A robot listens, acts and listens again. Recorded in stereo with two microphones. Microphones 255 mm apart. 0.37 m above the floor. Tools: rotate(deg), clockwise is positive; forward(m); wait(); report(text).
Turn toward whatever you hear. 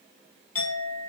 rotate(-60)
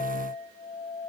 rotate(-35)
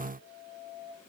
report("Found it: a clink, straight ahead, 1 to 2 m away.")